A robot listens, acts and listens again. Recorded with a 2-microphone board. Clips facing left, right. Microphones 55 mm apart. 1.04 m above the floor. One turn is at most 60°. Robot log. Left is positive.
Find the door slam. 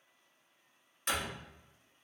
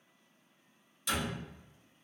note: The door slam: about 45° left or 135° left.
cmd yaw +45
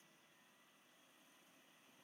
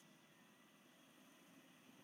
cmd idle
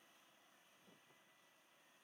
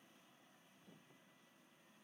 end: I heard a door slam, but can't make it out now. It was about straight ahead or 90° left.